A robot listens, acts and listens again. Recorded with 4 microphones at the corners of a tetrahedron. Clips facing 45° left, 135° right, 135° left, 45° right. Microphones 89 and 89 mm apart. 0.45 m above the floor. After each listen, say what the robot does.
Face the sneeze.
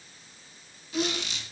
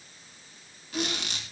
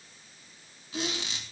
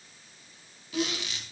Turn 40° right.
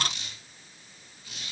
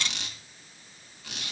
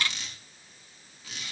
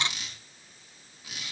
Facing where the sneeze came from. I can't hear it now.